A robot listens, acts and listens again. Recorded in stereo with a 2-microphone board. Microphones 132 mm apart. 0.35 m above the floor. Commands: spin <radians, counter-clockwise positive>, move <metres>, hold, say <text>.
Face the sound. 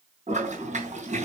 spin -1.05
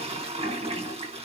spin -0.96
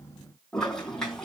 say Facing the toilet flushing, over 4 m away.